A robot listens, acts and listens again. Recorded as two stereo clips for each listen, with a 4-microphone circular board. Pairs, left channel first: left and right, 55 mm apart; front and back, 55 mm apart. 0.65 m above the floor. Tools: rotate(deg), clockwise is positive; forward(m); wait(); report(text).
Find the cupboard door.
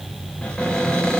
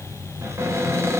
rotate(-160)
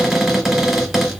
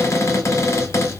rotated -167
report("Facing the cupboard door, 2 to 4 m away.")